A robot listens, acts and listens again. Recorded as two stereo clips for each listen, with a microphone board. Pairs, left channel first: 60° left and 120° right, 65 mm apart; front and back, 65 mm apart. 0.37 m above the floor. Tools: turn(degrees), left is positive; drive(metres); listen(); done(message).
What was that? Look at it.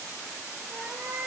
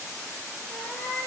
turn(degrees=-70)
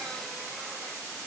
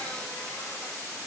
listen()
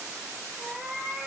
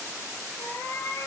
turn(degrees=-40)
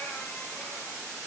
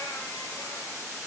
listen()
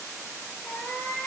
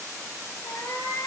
turn(degrees=-15)
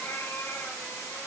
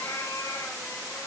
done("Facing the cat meowing.")